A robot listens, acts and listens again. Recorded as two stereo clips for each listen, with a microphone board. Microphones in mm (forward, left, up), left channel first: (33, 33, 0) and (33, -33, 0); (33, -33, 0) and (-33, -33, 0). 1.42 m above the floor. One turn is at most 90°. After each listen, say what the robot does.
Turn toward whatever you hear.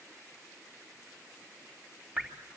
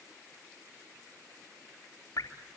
Turn 20° right.
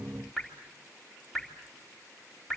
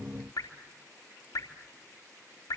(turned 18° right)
Found it: dripping, straight ahead.